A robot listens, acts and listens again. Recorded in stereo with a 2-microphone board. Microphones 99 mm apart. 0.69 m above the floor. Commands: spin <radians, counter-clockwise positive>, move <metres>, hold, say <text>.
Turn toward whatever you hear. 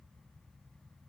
hold
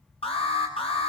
spin 1.31
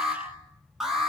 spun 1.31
say Found it: an alarm, straight ahead.